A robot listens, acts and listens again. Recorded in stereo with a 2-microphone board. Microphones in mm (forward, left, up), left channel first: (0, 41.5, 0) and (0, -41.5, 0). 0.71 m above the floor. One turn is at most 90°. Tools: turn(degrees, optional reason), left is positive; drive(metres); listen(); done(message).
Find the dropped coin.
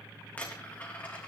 turn(degrees=20, reason="The dropped coin: about 20° left or 160° left.")
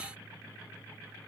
listen()
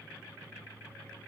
done("I heard a dropped coin, but can't make it out now. It was about straight ahead or 140° left.")